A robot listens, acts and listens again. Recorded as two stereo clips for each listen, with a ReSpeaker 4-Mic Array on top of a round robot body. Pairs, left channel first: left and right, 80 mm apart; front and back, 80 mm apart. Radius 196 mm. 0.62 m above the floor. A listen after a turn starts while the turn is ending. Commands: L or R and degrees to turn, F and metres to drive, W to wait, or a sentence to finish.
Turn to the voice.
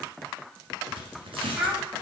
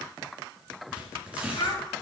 R10
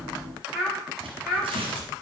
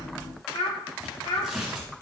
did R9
Found it: a child speaking, straight ahead.